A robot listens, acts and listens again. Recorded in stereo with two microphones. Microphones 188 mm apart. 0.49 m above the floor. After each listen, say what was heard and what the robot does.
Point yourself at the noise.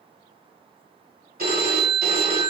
The phone ringing: about 55° right or 125° right. Turn 55° right.
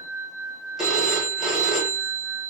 Found it: a phone ringing, straight ahead.